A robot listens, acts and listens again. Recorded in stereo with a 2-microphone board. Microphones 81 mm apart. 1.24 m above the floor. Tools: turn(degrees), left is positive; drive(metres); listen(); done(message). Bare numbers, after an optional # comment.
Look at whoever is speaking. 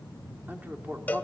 # The man speaking: about 25° right or 155° right.
turn(-25)
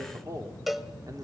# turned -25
# So it is at 130° right.
turn(-130)
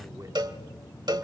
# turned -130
listen()
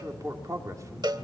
# The man speaking is now 45° right.
turn(-45)
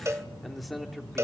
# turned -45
done("Facing the man speaking.")